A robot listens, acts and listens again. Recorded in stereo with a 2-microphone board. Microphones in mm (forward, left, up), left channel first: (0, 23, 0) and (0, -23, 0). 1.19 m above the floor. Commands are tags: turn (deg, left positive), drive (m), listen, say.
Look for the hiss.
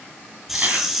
<turn deg="-30"/>
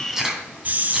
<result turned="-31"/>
<turn deg="-145"/>
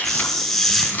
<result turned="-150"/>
<say>Facing the hiss.</say>